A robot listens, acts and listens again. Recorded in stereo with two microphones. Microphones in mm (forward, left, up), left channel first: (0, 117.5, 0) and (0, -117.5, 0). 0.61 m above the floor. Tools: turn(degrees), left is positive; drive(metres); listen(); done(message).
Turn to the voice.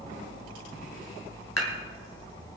listen()
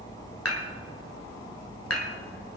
listen()
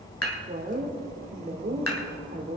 turn(degrees=-40)
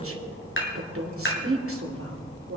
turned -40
turn(degrees=-90)
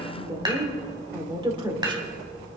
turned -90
turn(degrees=-20)
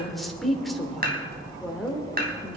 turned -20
done("Found it: a woman speaking, straight ahead.")